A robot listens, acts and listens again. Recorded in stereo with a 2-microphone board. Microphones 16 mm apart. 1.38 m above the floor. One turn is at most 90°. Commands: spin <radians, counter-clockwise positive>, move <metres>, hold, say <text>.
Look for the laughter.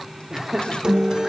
spin -0.61
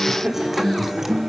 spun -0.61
spin -1.57
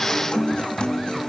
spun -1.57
spin -0.35
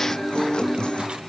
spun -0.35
hold
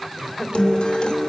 spin 0.35
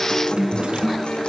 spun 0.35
hold
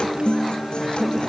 hold
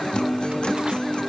say Facing where the laughter came from. I can't hear it now.